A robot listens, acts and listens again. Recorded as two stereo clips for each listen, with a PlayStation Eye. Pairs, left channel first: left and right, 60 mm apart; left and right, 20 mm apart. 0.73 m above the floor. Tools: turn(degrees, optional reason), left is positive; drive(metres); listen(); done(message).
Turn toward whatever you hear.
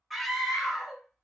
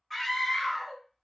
turn(degrees=-30)
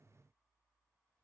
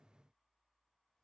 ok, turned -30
listen()
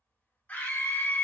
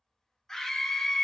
turn(degrees=25, reason="So it is at 25° left.")
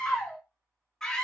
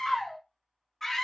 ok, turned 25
turn(degrees=10, reason="The scream is now 10° left.")
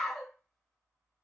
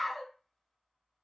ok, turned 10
done("Found it: a scream, straight ahead, 1 to 2 m away.")